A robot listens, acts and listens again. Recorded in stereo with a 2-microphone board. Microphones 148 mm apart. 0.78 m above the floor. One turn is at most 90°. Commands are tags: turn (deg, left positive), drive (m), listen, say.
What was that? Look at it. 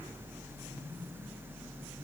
<listen/>
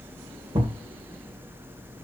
<turn deg="-35"/>
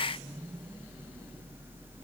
<listen/>
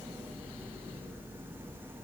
<say>I heard a thud, but can't make it out now. It was about straight ahead or 110° right.</say>